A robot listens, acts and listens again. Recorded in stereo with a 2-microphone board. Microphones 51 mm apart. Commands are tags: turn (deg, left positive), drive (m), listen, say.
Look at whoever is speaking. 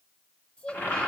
<turn deg="25"/>
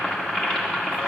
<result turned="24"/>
<listen/>
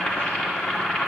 <listen/>
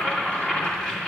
<say>I heard a child speaking, but can't make it out now. It was about straight ahead or 130° left.</say>